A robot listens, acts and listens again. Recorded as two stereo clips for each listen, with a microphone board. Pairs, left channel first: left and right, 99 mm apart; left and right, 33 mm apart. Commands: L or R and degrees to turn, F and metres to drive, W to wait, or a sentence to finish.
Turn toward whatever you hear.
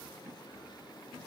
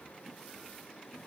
W
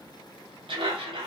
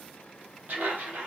R60
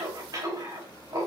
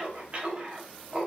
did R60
R45
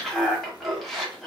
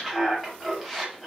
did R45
Facing the laughter.